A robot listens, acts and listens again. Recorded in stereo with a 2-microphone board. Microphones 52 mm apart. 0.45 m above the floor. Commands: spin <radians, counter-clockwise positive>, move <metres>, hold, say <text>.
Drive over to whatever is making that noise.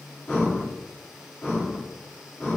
spin 0.52
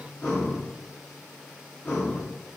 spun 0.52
spin 2.44
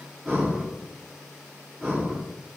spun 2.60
spin -0.17
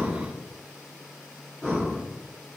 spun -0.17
move 1.0
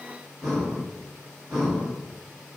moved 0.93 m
move 1.0
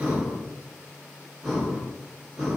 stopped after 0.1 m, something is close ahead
say Arrived at the breathing, straight ahead.